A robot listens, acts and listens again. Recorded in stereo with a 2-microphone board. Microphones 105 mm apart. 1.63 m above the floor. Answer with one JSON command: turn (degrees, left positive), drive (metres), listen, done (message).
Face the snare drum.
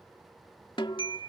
{"turn": 50}
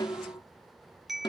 {"turn": 60}
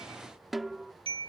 {"done": "Found it: a snare drum, straight ahead."}